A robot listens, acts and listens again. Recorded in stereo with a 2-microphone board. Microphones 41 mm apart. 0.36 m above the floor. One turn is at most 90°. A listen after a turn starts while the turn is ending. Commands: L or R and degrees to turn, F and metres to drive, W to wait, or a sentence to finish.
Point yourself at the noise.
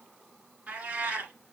R45
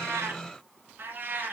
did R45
R45
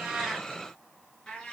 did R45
L20
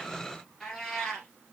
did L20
L10
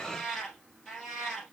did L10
Found it: a cat meowing, straight ahead, 2 to 4 m away.